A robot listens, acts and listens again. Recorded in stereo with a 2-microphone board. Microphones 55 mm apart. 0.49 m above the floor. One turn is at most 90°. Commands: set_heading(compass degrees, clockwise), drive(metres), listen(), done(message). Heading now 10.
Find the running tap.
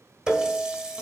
set_heading(25)
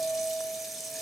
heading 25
done("Facing the running tap.")